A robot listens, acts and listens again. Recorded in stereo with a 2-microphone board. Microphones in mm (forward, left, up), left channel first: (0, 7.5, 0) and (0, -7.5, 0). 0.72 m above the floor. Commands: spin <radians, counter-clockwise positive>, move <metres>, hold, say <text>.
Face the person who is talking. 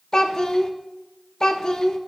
spin 0.87
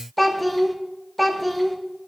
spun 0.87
spin 0.26
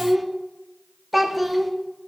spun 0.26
say Facing the child speaking, under 1 m away.